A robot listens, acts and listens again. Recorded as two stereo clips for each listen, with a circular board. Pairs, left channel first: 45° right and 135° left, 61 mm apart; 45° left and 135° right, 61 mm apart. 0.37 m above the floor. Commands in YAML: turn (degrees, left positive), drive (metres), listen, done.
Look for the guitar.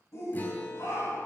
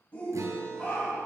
turn: -105
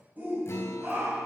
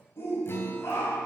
done: "Found it: a guitar, straight ahead, 1 to 2 m away."